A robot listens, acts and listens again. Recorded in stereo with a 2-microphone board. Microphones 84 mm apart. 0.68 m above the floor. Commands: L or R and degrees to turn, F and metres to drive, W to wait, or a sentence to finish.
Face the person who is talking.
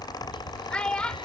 L30
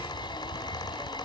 W
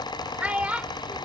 R20
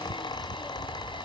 W
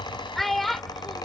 Found it: a child speaking, straight ahead.